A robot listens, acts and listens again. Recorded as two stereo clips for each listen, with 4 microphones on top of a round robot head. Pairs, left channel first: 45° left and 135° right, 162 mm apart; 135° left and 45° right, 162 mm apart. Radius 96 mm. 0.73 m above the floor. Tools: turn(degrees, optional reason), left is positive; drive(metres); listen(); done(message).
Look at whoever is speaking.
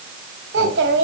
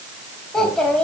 turn(degrees=-140, reason="The child speaking: 140° right.")
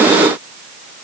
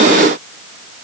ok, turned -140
listen()
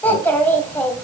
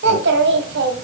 turn(degrees=-35, reason="The child speaking is now 35° right.")
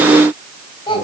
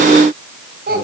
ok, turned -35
turn(degrees=-15, reason="The child speaking is now 15° right.")
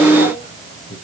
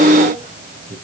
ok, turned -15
done("Found it: a child speaking, straight ahead.")